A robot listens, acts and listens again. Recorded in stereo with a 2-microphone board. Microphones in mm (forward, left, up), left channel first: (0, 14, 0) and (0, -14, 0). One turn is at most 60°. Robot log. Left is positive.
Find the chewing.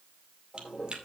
note: The chewing: about 35° right or 145° right.
cmd yaw -35
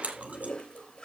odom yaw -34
note: So it is at 110° right.
cmd yaw -60
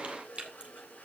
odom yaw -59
note: The chewing is now 50° right.
cmd yaw -50
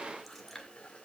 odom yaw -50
end: Facing the chewing.